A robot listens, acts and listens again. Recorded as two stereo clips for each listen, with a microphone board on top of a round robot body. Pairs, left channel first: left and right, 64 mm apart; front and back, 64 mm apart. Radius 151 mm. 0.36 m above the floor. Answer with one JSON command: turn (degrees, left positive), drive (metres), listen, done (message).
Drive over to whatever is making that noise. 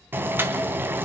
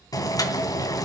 {"turn": -30}
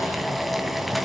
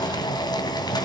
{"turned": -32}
{"drive": 1.0}
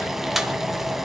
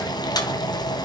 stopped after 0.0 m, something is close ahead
{"done": "Blocked. The boiling is further on, straight ahead."}